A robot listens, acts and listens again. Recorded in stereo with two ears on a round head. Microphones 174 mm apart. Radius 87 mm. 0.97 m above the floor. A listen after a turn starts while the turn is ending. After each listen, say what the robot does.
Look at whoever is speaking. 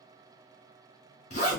Keep listening.
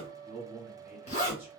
Turn 30° right.
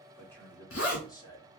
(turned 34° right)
Turn 25° left.
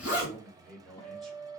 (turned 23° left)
Facing the man speaking, 1 to 2 m away.